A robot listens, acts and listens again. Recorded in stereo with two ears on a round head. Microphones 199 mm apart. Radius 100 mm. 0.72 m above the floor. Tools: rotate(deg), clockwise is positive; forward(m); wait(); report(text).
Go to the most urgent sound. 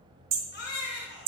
rotate(-50)
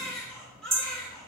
forward(1.0)
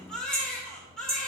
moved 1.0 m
forward(1.0)
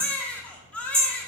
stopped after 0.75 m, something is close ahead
report("Arrived at the baby crying, straight ahead.")